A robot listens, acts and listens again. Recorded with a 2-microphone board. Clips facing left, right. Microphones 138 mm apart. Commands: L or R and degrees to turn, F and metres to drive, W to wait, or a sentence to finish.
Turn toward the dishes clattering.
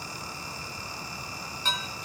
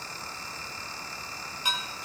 R30
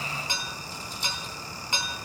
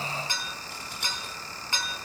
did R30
L20
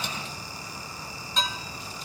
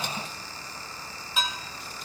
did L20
Facing the dishes clattering, 2 to 4 m away.